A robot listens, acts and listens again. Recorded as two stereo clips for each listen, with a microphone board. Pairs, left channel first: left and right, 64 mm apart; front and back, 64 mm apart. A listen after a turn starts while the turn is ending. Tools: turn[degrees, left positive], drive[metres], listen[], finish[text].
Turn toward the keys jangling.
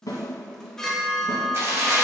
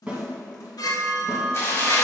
Thought: The keys jangling: 40° right.
Action: turn[-40]
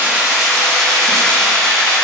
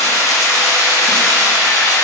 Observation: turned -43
Thought: The keys jangling is now 15° left.
Action: turn[15]
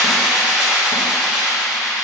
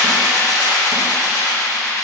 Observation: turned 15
Action: finish[Facing the keys jangling.]